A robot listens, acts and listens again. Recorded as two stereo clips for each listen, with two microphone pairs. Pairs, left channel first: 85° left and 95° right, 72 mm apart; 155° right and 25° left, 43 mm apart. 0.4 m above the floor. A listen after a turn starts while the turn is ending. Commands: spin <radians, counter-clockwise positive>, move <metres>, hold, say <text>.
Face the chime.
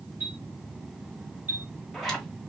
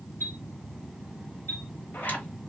spin -2.71
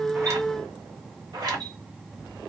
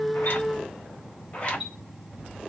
spin -1.13
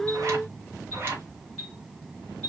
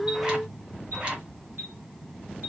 say Facing the chime, 1 to 2 m away.